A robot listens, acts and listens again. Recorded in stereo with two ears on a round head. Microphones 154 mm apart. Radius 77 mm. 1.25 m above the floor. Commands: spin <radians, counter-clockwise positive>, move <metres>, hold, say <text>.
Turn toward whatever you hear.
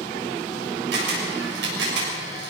spin -1.31
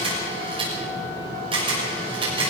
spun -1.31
spin -0.52
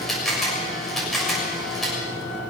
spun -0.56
say Found it: a camera shutter, straight ahead, over 4 m away.